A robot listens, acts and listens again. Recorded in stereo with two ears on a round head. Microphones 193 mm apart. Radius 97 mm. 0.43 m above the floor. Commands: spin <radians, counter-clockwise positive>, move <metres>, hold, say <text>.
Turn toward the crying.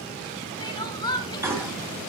spin 0.35
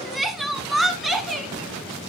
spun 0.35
say Facing the crying, 1 to 2 m away.